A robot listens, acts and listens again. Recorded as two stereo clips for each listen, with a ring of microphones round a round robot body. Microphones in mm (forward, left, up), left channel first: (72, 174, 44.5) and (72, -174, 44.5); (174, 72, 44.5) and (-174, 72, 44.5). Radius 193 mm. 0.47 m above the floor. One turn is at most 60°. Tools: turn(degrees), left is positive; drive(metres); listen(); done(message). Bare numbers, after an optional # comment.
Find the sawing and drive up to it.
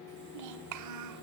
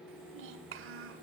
listen()
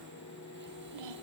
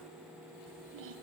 listen()
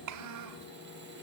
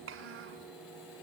done("I can't make out sawing to turn to.")